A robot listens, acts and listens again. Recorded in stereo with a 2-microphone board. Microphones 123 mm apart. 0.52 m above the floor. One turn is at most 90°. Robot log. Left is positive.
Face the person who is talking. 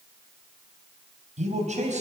note: The man speaking: about 70° right or 110° right.
cmd yaw -70
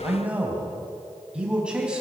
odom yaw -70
end: Facing the man speaking.